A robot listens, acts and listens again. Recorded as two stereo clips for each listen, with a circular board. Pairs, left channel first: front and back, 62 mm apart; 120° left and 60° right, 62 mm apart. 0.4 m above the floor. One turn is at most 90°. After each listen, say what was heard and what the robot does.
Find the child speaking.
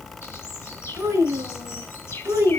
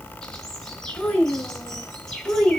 The child speaking: 165° right. Turn 90° right.
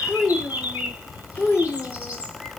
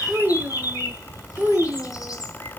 The child speaking is now 35° right. Turn 35° right.
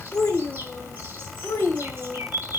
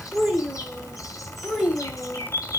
The child speaking is now 25° left. Turn 25° left.
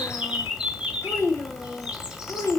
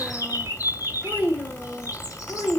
Found it: a child speaking, straight ahead, 1 to 2 m away.